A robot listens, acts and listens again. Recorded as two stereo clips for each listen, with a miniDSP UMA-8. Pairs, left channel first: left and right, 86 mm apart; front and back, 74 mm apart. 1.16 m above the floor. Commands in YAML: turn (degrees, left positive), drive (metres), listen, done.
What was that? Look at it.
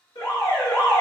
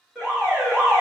turn: 100
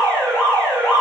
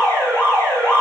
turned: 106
done: "Found it: an alarm, straight ahead, 1 to 2 m away."